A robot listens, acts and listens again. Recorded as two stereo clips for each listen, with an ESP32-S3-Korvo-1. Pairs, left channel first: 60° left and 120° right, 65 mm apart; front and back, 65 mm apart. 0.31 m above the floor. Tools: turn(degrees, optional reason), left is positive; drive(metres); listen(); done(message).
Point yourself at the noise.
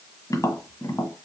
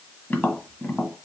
turn(degrees=60, reason="The tapping: 60° left.")
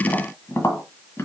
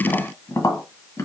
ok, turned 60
turn(degrees=20, reason="The tapping is now 20° left.")
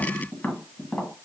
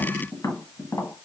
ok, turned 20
done("Found it: tapping, straight ahead, 1 to 2 m away.")